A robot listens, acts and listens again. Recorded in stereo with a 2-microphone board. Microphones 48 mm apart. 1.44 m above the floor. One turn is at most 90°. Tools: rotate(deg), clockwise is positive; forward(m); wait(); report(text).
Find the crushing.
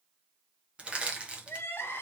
rotate(25)
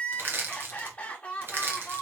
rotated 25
rotate(90)
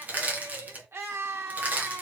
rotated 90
rotate(35)
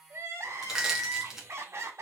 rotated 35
rotate(10)
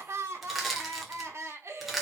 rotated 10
report("Found it: crushing, straight ahead.")